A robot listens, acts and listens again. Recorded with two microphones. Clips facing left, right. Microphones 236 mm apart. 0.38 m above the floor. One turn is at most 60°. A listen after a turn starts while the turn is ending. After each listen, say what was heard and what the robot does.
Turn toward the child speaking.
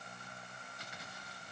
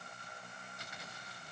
Keep listening.
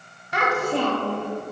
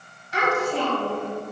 The child speaking: about 65° left or 115° left. Turn 60° left.
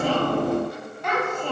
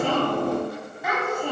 So it is at 10° right. Turn 10° right.
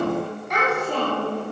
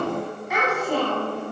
The child speaking is now 10° right. Turn 10° right.
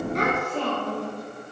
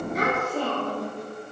The child speaking is now 10° right. Turn 10° right.
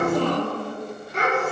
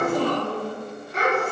Facing the child speaking, 2 to 4 m away.